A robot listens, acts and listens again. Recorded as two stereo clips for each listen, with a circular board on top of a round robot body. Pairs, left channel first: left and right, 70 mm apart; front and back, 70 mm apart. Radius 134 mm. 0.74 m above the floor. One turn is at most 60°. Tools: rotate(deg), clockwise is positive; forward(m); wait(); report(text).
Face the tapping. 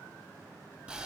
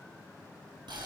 wait()
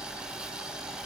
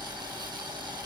wait()
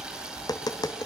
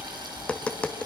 rotate(-60)
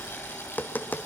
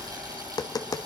rotate(-25)
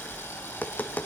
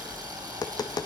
rotate(-25)
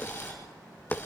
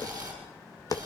rotate(-20)
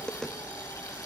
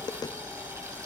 rotate(-10)
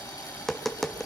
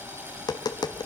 report("Found it: tapping, straight ahead, 1 to 2 m away.")